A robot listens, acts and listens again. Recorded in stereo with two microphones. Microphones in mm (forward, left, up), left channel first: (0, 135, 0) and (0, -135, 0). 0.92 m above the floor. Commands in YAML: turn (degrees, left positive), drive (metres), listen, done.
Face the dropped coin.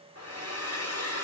listen: true
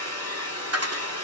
turn: -65
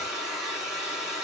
listen: true
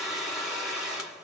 done: "I heard a dropped coin, but can't make it out now. It was about straight ahead or 50° right."